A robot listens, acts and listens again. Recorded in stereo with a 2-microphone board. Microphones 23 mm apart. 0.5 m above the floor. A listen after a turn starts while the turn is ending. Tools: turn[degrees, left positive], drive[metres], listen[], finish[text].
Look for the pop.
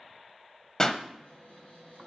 Thought: The pop: about 30° left or 150° left.
Action: turn[30]
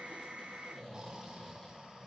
Action: listen[]
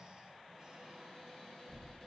Action: finish[I heard a pop, but can't make it out now. It was about straight ahead or 120° left.]